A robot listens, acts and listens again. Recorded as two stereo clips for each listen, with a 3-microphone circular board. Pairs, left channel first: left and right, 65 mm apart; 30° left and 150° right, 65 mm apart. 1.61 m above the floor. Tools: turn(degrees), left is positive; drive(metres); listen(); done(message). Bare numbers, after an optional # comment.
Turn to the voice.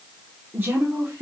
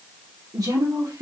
# The woman speaking: 140° right.
turn(-140)
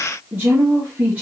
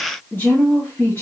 # The woman speaking is now 20° right.
turn(-20)
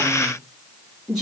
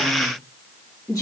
done("Found it: a woman speaking, straight ahead.")